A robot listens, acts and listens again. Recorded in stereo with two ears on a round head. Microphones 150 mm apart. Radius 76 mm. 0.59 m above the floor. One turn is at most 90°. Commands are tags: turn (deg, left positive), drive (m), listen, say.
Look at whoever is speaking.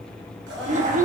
<turn deg="-45"/>
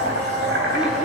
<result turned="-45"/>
<listen/>
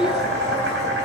<listen/>
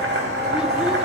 <say>I heard a child speaking, but can't make it out now. It was about straight ahead or 90° right.</say>